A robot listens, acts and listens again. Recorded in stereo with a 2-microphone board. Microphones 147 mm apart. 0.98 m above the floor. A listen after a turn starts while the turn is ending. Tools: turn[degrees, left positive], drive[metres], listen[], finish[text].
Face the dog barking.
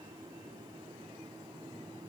Action: listen[]
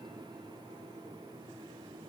Action: listen[]
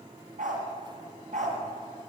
Thought: The dog barking: about 60° right or 120° right.
Action: turn[-60]
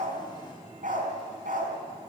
Thought: So it is at 70° right.
Action: turn[-70]
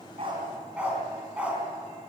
Thought: The dog barking is now 10° right.
Action: turn[-10]
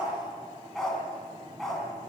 Action: finish[Facing the dog barking, over 4 m away.]